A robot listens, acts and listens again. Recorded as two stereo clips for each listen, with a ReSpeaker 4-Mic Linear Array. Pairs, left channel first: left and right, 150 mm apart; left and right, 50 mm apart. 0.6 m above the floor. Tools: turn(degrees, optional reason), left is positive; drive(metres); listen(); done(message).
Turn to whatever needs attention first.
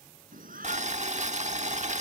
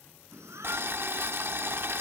turn(degrees=-70, reason="The shout: about 70° right or 110° right.")
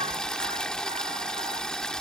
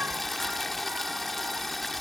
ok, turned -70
listen()
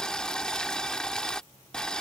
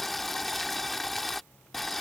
listen()
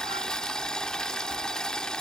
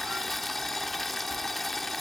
done("I heard a shout, but can't make it out now. It was about straight ahead or 40° right.")